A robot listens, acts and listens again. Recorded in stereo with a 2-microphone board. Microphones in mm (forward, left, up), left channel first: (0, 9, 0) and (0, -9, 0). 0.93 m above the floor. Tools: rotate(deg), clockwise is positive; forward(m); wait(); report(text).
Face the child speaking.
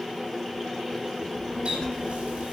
rotate(-40)
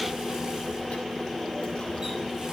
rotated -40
rotate(-100)
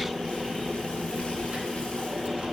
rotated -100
rotate(65)
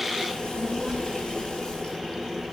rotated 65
rotate(15)
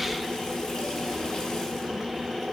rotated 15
report("Facing the child speaking, 2 to 4 m away.")